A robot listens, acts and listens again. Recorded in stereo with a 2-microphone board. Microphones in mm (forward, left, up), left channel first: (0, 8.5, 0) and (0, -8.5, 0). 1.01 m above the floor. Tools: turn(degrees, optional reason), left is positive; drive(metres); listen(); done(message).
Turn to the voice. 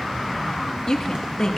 turn(degrees=40, reason="The woman speaking: about 40° left or 140° left.")
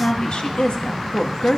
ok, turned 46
turn(degrees=90, reason="So it is at 90° left.")
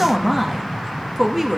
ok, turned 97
done("Facing the woman speaking, 1 to 2 m away.")